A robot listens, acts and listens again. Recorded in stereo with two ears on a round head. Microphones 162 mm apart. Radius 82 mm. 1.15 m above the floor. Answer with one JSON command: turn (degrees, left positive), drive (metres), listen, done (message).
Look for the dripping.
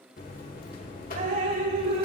{"turn": -50}
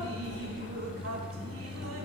{"listen": true}
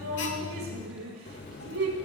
{"turn": -80}
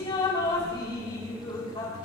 {"turn": 25}
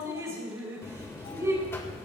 {"turn": -15}
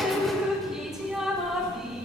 {"done": "Facing the dripping."}